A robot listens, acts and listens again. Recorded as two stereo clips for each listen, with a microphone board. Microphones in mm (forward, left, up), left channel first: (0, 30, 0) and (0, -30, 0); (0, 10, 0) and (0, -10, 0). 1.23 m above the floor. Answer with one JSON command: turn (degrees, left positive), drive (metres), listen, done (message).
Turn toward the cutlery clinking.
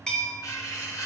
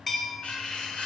{"turn": 70}
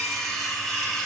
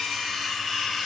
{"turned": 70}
{"done": "Facing the cutlery clinking."}